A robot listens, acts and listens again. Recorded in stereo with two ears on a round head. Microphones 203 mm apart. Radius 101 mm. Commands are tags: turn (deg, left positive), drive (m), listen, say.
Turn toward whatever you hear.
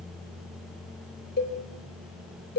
<turn deg="50"/>
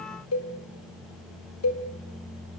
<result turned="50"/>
<turn deg="80"/>
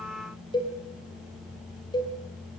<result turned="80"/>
<turn deg="20"/>
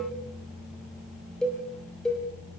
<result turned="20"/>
<say>Facing the cowbell.</say>